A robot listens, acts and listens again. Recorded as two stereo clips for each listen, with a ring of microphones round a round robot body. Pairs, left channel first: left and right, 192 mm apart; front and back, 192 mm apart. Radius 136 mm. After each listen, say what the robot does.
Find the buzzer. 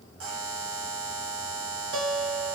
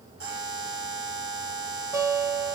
Turn 125° right.
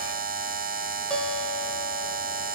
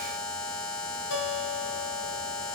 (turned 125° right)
Turn 45° right.
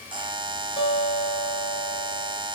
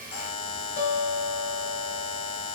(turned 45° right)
Turn 20° right.
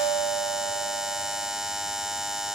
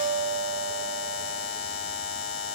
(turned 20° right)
Facing the buzzer.